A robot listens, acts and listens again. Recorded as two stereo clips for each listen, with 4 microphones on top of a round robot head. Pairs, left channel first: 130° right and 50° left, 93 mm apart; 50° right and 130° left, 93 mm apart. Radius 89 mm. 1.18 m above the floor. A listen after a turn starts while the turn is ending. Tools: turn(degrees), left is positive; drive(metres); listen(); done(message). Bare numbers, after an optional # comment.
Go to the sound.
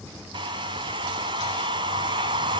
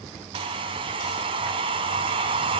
# The hair dryer: 95° left.
turn(95)
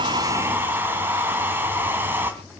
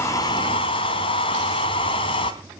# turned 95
# The hair dryer is now 15° right.
turn(-15)
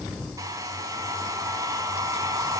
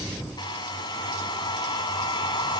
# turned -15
drive(1.0)
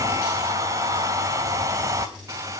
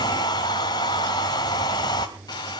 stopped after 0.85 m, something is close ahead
done("I am next to the hair dryer.")